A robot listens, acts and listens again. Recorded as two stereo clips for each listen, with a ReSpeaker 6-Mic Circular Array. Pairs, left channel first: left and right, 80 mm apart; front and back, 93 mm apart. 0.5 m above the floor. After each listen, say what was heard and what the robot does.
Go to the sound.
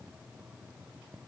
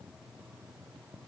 Keep listening.
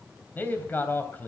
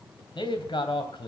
The man speaking: 25° left. Turn 25° left.
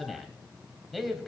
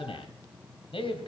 Drive 1.0 m forward.
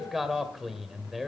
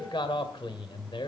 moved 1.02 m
Drive 1.0 m forward.
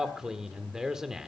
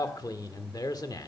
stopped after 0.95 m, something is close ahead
The man speaking is now 10° right. Turn 10° right.
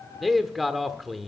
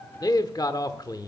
Arrived at the man speaking, straight ahead.